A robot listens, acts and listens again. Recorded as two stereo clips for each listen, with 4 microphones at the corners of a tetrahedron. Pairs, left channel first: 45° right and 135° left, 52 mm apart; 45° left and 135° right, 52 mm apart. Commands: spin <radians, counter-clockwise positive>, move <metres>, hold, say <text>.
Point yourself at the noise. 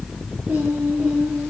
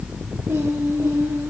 spin -2.79
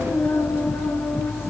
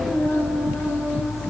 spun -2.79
say Found it: singing, straight ahead.